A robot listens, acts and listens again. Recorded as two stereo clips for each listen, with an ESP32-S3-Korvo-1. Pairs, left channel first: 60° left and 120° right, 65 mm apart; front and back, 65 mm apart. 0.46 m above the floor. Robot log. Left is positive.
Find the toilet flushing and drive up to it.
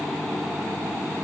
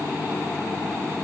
cmd idle
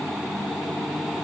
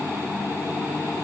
cmd idle
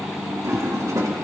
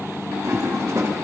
note: The toilet flushing: 145° right.
cmd yaw -145
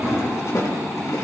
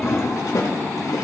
note: The toilet flushing is now 25° left.
cmd yaw +25
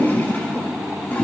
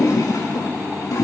cmd fwd 1.0
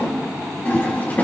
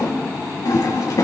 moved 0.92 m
cmd fwd 1.0
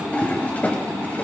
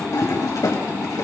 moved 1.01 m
cmd fwd 1.0
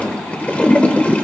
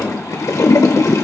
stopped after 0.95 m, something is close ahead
end: I am next to the toilet flushing.